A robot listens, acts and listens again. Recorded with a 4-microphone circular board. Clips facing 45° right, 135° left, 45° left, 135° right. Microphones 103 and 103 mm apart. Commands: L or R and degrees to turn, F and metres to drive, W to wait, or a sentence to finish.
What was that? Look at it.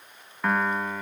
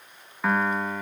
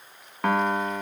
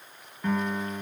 L45
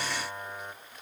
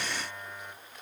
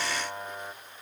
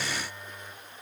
L10
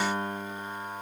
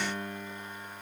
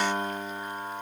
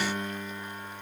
Facing the piano, 1 to 2 m away.